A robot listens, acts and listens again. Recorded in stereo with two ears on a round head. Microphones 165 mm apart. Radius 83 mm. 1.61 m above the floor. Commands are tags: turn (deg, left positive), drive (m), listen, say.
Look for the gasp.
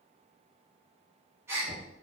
<turn deg="-30"/>
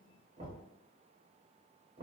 <listen/>
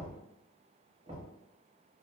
<say>I heard a gasp, but can't make it out now. It was about 15° left or 135° right.</say>